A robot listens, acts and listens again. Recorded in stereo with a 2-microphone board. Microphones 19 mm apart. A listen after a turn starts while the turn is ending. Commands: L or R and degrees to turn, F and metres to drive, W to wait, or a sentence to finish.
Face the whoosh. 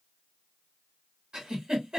W
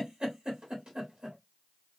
W
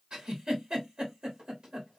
I can't make out a whoosh to turn to.